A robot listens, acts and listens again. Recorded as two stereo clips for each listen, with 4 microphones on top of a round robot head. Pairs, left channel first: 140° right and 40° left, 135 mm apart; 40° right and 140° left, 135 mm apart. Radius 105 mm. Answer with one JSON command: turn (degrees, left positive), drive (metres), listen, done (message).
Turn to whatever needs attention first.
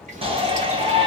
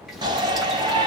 {"turn": 85}
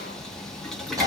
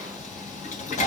{"turn": -20}
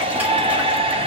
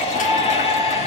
{"done": "Facing the shout."}